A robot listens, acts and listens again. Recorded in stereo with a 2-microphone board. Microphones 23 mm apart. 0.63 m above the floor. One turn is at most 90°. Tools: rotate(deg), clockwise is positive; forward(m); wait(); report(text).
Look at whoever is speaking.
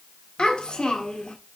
rotate(-45)
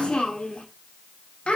rotate(-80)
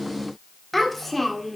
rotate(-10)
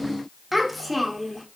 report("Facing the child speaking.")